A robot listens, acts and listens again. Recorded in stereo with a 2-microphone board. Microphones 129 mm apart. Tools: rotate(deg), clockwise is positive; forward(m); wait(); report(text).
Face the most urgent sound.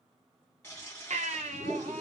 rotate(70)
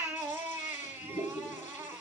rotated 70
rotate(15)
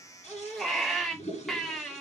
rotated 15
report("Facing the baby crying.")